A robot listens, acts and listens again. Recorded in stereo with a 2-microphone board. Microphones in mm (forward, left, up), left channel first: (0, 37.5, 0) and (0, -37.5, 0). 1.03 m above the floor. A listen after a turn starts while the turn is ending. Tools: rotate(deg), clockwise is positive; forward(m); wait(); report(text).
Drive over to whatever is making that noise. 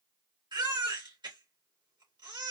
rotate(90)
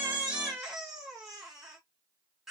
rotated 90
forward(1.0)
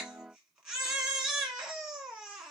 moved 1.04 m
rotate(10)
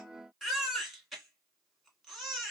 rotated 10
forward(1.0)
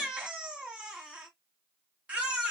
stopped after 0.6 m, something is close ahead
rotate(15)
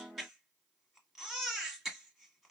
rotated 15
report("Arrived at the baby crying, straight ahead.")